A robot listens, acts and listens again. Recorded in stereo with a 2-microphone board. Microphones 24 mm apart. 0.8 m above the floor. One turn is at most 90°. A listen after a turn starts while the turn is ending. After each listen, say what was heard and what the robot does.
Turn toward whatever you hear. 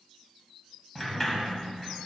Turn 30° left.
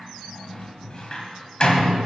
So it is at 135° left. Turn 90° left.
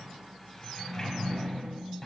The sliding door is now 20° left. Turn 20° left.
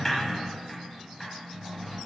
Found it: a sliding door, straight ahead.